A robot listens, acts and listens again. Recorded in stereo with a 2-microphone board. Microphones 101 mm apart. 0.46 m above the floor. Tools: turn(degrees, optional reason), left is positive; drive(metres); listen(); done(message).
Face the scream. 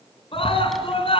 turn(degrees=60, reason="The scream: about 60° left or 120° left.")
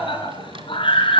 turn(degrees=55, reason="So it is at 55° left.")
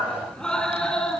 done("Found it: a scream, straight ahead, over 4 m away.")